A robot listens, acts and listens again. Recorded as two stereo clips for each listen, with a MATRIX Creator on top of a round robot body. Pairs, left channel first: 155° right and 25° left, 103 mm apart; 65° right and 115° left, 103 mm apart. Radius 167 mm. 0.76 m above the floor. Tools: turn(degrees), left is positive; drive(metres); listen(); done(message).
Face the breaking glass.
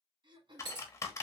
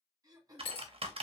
turn(degrees=-30)
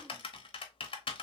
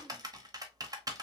done("Facing where the breaking glass came from. I can't hear it now.")